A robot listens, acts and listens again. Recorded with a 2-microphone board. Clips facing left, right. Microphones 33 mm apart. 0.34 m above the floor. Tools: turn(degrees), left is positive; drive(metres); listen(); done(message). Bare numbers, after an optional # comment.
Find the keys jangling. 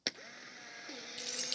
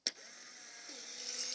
# The keys jangling: about 60° left or 120° left.
turn(60)
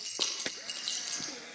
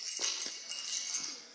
# So it is at 65° left.
turn(65)
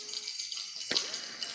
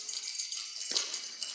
# The keys jangling is now 20° left.
turn(20)
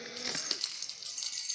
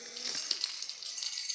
# The keys jangling is now 10° right.
turn(-10)
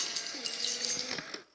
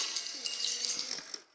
done("Facing the keys jangling, over 4 m away.")